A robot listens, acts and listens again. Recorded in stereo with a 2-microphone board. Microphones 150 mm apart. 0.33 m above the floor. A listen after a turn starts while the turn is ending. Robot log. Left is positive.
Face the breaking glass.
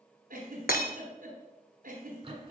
cmd yaw +90
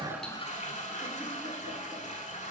end: Facing where the breaking glass came from. I can't hear it now.